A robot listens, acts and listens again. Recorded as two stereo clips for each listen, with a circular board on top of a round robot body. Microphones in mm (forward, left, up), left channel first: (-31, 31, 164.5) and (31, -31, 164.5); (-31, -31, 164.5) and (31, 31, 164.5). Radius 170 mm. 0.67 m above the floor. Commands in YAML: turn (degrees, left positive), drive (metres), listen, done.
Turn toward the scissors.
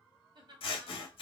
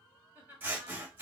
turn: 115
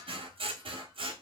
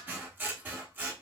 turn: -25
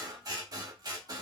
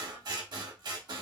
done: "Found it: scissors, straight ahead."